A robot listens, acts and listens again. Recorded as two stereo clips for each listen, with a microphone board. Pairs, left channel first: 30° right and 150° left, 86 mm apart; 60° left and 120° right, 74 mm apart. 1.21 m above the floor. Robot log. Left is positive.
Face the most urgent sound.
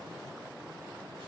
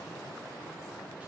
cmd idle
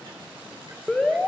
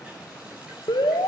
note: The alarm: 50° left.
cmd yaw +50
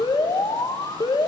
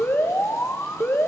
end: Found it: an alarm, straight ahead, 1 to 2 m away.